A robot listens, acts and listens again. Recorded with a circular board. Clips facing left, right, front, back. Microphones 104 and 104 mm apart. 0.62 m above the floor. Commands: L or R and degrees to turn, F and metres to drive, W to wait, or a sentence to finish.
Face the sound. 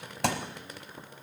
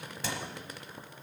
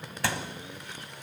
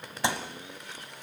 L110
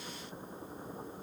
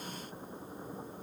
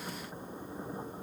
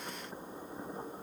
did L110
I heard a thud from this way, but can't make it out now.